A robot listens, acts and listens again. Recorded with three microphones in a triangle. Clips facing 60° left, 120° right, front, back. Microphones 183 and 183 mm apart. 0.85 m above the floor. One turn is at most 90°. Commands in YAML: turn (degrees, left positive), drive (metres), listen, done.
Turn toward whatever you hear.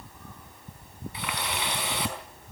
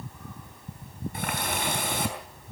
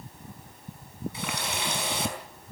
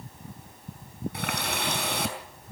turn: -90
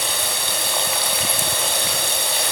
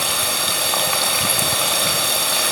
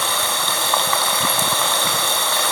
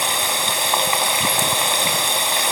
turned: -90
turn: -90
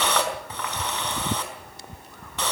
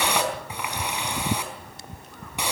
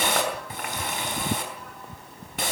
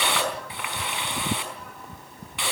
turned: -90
turn: -45
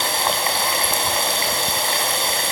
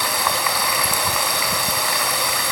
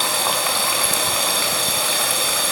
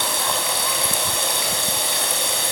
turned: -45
done: "Found it: a running tap, straight ahead, over 4 m away."